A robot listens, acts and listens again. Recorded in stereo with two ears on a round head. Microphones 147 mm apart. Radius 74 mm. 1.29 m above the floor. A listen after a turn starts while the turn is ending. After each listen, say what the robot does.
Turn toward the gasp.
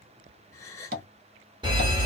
Turn 20° left.
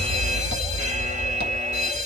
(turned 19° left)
Keep listening.
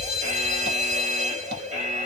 I heard a gasp, but can't make it out now. It was about straight ahead or 140° left.